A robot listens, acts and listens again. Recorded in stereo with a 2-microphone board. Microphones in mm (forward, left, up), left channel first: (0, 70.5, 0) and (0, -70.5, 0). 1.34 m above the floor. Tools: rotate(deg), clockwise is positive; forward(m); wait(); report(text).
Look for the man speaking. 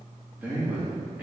rotate(30)
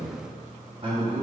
rotate(135)
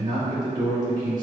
rotate(30)
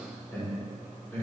rotate(-15)
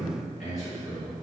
report("Facing the man speaking, over 4 m away.")